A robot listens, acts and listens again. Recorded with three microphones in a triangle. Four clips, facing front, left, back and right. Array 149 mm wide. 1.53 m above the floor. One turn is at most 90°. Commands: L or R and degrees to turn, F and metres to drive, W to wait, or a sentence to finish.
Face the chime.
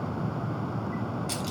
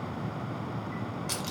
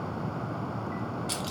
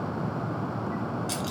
W
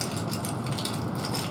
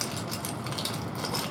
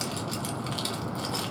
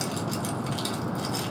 W
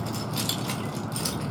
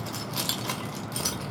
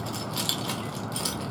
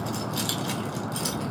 I can't make out a chime to turn to.